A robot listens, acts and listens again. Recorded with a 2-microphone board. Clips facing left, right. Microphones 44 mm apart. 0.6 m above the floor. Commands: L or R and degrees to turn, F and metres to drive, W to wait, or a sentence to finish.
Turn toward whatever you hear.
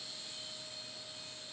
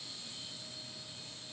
W
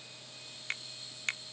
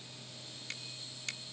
L40
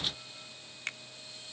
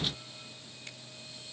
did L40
L90
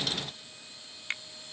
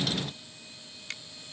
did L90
L35
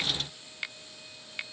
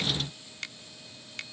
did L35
L15
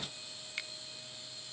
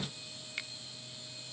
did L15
Facing the finger snap.